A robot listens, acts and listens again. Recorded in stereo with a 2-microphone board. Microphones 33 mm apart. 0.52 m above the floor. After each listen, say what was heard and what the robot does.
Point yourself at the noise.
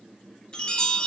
The chime: about 30° left or 150° left. Turn 30° left.
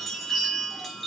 Facing the chime, 1 to 2 m away.